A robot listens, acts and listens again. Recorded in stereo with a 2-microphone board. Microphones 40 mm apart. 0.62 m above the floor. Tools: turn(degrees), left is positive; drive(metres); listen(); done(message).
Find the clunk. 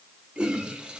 listen()
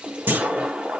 turn(degrees=-65)
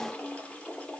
listen()
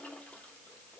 done("I heard a clunk, but can't make it out now. It was about straight ahead or 50° right.")